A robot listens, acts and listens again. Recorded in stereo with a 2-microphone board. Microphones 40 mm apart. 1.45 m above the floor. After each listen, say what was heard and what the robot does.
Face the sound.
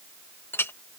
The clink: about 70° left or 110° left. Turn 70° left.
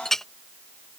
So it is at 10° left. Turn 10° left.
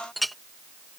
Facing the clink.